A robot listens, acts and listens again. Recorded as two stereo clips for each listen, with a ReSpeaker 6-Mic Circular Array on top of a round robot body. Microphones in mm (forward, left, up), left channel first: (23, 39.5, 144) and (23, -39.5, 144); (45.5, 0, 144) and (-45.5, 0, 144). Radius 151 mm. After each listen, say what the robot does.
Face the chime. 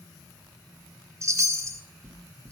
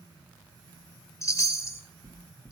Turn 50° right.
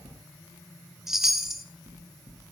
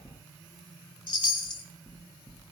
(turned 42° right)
Found it: a chime, straight ahead.